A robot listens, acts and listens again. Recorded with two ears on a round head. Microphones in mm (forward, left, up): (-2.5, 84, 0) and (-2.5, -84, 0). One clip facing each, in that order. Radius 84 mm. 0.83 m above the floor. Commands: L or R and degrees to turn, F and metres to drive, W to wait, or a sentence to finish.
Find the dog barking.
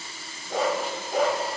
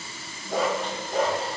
L30
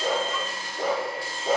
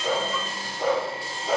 L135
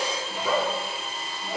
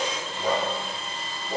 R35
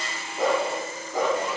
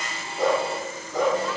Found it: a dog barking, straight ahead, over 4 m away.